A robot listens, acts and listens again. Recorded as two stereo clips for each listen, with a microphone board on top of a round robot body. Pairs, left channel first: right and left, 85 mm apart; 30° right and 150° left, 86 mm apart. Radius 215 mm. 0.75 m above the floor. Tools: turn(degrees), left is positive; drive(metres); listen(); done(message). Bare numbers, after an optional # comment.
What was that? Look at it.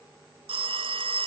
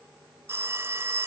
# The phone ringing: 85° left.
turn(85)
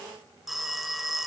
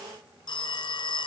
done("Facing the phone ringing, 1 to 2 m away.")